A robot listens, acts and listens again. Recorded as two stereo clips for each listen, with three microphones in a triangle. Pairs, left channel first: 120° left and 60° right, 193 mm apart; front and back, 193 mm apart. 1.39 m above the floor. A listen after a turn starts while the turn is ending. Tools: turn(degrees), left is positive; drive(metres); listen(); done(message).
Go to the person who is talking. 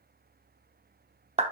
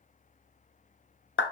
listen()
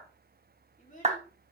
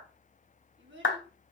turn(degrees=165)
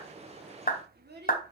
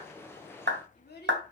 turn(degrees=-30)
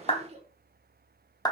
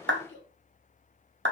drive(metres=1.0)
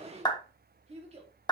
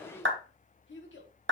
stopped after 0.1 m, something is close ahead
done("Something is in my way. I am facing the child speaking but have not reached it.")